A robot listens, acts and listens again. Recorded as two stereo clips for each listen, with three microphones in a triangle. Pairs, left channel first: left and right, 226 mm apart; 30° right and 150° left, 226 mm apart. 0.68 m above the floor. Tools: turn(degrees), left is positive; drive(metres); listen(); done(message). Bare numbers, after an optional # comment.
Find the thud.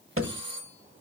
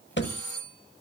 # The thud: 70° right.
turn(-70)
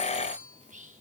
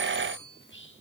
done("Facing where the thud came from. I can't hear it now.")